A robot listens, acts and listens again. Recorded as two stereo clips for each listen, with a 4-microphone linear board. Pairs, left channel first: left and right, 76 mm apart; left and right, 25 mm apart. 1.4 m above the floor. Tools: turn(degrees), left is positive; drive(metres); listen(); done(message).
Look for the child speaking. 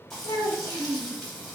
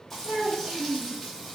turn(degrees=-60)
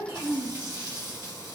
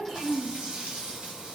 turn(degrees=-20)
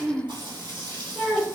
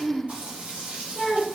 done("Found it: a child speaking, straight ahead, 1 to 2 m away.")